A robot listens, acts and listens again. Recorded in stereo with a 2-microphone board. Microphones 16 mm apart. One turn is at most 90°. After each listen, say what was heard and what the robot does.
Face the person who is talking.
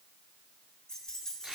Keep listening.
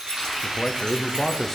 The man speaking: about 25° left or 155° left. Turn 25° left.
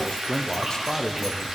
So it is at 130° left. Turn 90° left.
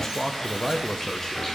The man speaking is now 35° left. Turn 35° left.
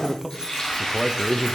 Found it: a man speaking, straight ahead.